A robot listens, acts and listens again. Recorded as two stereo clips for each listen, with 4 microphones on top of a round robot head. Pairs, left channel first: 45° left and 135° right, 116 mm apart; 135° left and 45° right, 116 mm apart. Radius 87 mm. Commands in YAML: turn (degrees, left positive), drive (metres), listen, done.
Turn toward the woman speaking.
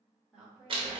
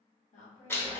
turn: 145
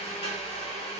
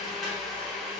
listen: true
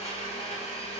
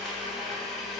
listen: true
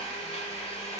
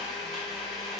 done: "I heard a woman speaking from this way, but can't make it out now."